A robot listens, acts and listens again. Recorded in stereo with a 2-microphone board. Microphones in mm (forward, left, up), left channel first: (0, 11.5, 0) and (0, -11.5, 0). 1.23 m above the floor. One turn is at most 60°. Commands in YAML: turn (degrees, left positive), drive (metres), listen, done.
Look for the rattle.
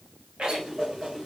turn: -55
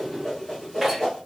done: "Found it: a rattle, straight ahead."